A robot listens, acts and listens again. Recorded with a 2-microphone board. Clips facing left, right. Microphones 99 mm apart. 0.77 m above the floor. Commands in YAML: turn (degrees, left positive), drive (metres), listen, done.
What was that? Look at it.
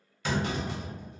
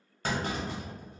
turn: -40
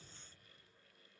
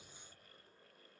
listen: true
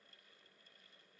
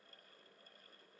done: "I heard a clunk, but can't make it out now. It was about straight ahead or 100° right."